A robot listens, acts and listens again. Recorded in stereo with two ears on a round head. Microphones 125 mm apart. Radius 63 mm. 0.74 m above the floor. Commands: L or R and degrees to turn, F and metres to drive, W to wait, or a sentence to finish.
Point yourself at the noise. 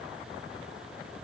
W
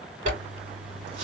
R55
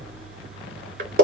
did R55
R70
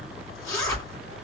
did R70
L25
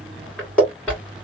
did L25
L10
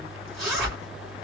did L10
Found it: a zipper, straight ahead.